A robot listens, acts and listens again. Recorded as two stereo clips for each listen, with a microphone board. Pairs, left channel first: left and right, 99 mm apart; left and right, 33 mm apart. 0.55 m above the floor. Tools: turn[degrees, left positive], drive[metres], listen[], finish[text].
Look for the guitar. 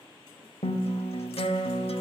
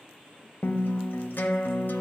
Action: turn[90]
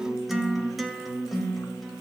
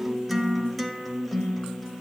Action: finish[Facing the guitar.]